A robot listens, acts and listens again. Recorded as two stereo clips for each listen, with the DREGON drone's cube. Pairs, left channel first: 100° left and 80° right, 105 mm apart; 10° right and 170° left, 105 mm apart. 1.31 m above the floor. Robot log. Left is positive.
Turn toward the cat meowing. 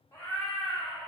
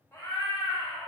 note: The cat meowing: 60° left.
cmd yaw +60
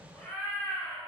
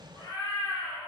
note: The cat meowing is now 40° left.
cmd yaw +40
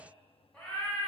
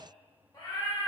note: The cat meowing is now 30° left.
cmd yaw +30
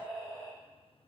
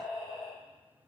note: The cat meowing is now 15° left.
cmd yaw +15
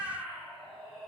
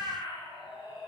note: The cat meowing is now 15° left.
cmd yaw +15
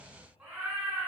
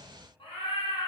end: Facing the cat meowing.